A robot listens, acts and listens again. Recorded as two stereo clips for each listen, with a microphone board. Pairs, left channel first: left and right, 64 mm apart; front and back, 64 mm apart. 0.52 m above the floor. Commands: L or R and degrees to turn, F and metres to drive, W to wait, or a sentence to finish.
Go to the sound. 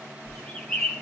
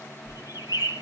L20
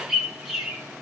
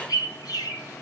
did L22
F1.0
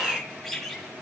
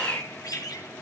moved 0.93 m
F1.0
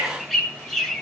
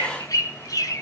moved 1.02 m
F1.0
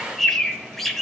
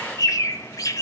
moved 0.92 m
F1.0
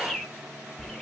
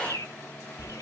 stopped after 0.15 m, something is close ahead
Arrived at the bird, straight ahead.